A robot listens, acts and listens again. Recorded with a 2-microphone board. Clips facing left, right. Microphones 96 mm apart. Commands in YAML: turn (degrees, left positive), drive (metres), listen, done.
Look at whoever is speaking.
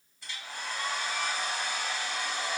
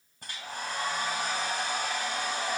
listen: true
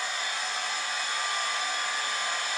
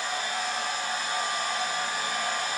listen: true
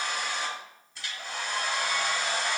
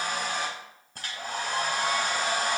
done: "I can't make out anyone speaking, only a hair dryer."